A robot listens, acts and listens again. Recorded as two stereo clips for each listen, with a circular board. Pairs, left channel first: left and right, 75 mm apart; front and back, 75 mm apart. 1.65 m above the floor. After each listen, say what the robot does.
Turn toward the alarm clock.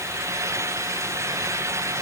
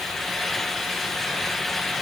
Keep listening.
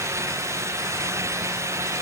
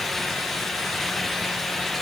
Keep listening.
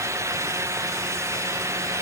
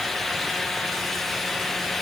I can't make out an alarm clock to turn to.